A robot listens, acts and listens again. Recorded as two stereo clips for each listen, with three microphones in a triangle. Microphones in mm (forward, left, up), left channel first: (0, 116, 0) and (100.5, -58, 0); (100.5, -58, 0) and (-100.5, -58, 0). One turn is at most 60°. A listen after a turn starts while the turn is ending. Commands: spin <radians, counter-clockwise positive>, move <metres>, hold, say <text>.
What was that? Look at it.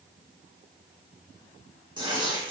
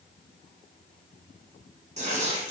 spin -1.05
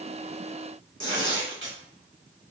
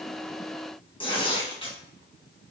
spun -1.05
spin -1.05
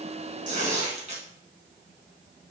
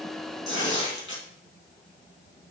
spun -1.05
say Found it: tearing paper, straight ahead, 2 to 4 m away.